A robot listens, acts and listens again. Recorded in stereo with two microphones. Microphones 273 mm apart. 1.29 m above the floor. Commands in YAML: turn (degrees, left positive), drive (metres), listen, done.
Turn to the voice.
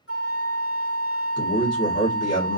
turn: 60
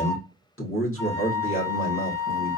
turn: 55
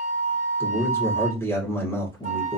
turn: 10
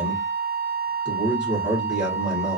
done: "Found it: a man speaking, straight ahead."